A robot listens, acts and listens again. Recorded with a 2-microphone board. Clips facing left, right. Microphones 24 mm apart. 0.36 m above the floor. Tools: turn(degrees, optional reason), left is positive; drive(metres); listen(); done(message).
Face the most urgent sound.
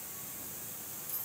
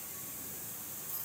listen()
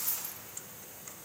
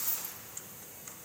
listen()
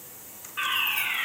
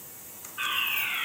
turn(degrees=55, reason="The fire alarm: about 55° left or 125° left.")
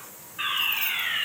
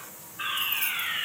turn(degrees=60, reason="So it is at 60° left.")
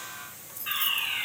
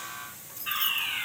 done("Facing the fire alarm.")